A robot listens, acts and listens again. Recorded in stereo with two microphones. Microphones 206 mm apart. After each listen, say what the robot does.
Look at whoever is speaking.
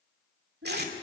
Turn 70° right.
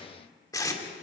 Keep listening.
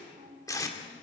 Turn 40° right.
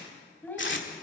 Turn 10° left.
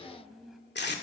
Facing the child speaking.